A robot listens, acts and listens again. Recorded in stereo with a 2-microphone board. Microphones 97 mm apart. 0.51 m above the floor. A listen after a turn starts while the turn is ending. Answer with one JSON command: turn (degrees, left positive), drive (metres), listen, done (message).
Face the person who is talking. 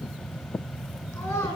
{"turn": 25}
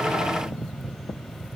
{"listen": true}
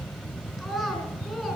{"done": "Facing the child speaking."}